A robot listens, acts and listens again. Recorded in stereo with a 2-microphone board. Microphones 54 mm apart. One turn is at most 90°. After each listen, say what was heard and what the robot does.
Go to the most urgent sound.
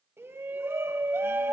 The shout: about 50° right or 130° right. Turn 50° right.
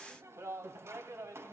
So it is at 70° right. Turn 70° right.
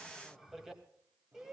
Drive 1.0 m forward.
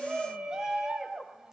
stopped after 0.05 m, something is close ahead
The shout is now 10° right. Turn 10° right.
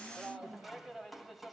Blocked. The shout is further on, straight ahead.